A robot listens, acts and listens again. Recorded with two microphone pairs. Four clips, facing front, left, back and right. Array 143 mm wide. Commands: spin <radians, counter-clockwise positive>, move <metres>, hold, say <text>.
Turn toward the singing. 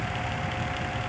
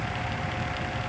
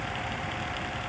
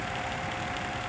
hold
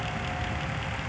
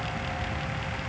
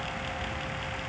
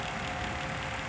hold
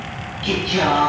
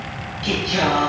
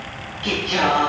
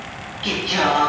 spin -2.36
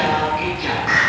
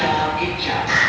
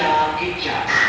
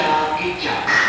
spin -0.87
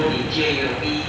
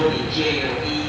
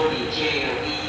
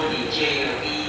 say Facing the singing, over 4 m away.